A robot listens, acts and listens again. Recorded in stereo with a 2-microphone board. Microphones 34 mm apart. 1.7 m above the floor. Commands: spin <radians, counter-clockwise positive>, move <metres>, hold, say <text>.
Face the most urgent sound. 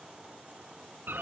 hold
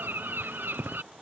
hold
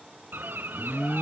spin 0.52
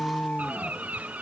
spin 2.53
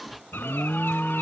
spin 0.17
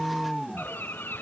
say Found it: an alarm, straight ahead.